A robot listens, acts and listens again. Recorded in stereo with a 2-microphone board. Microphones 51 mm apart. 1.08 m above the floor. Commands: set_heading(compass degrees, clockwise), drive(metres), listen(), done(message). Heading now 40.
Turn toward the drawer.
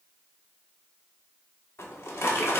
set_heading(335)
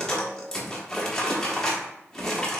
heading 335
set_heading(325)
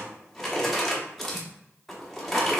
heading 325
done("Found it: a drawer, straight ahead, 1 to 2 m away.")